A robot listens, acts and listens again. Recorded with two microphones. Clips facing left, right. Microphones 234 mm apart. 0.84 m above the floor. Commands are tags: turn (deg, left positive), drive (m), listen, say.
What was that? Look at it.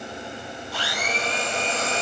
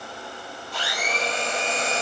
<turn deg="30"/>
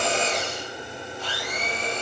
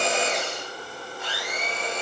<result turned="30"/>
<turn deg="145"/>
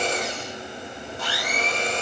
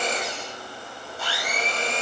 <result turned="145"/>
<turn deg="-10"/>
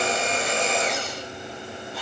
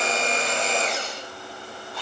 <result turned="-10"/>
<say>Found it: a blender, straight ahead.</say>